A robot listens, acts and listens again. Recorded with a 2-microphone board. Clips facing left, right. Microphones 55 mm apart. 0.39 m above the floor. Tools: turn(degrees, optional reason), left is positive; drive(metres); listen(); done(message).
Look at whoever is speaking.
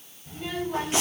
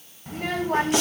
turn(degrees=-60, reason="The child speaking: about 60° right or 120° right.")
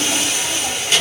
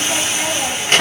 turn(degrees=-50, reason="So it is at 50° right.")
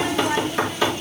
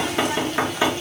turn(degrees=20, reason="The child speaking is now 20° left.")
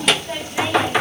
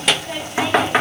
done("Facing the child speaking, 1 to 2 m away.")